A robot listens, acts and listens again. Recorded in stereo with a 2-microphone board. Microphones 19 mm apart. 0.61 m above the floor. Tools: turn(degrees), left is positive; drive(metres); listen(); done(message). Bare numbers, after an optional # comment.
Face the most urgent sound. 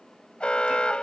# The alarm: about 70° left or 110° left.
turn(70)
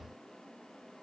listen()
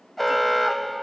done("Facing the alarm.")